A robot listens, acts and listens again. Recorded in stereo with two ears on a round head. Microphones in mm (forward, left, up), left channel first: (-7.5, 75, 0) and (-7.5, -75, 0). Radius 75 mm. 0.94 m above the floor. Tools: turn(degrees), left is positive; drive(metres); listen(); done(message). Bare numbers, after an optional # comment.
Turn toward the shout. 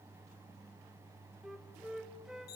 listen()
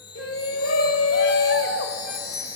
turn(90)
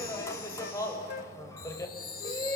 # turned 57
# So it is at 20° left.
turn(20)
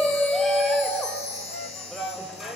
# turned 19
done("Facing the shout.")